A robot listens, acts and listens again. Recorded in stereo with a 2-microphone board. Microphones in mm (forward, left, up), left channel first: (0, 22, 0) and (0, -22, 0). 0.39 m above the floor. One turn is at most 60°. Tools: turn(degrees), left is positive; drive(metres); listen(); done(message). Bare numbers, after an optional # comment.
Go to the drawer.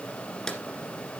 # The drawer: about 15° left or 165° left.
turn(15)
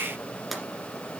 drive(1.0)
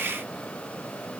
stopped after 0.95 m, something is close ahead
listen()
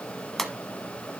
done("I am next to the drawer.")